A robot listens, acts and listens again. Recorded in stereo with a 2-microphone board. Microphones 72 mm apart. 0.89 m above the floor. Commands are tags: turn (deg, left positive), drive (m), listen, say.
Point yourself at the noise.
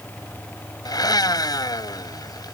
<turn deg="65"/>
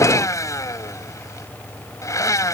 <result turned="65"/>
<turn deg="45"/>
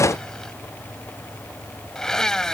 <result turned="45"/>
<say>Found it: a blender, straight ahead.</say>